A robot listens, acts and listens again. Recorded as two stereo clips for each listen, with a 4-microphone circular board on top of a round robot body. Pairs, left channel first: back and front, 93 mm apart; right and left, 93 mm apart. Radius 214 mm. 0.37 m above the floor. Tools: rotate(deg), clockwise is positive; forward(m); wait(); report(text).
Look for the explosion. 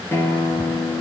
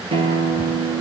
wait()
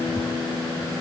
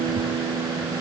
wait()
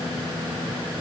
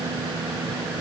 report("I can't make out an explosion, only a guitar.")